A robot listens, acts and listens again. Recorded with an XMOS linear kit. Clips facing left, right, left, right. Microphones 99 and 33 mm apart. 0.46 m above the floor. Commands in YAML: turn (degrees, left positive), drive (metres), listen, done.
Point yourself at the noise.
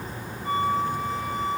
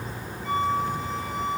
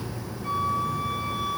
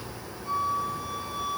turn: 50
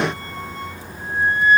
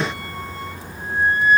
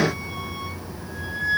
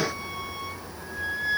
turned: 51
done: "Facing the flute."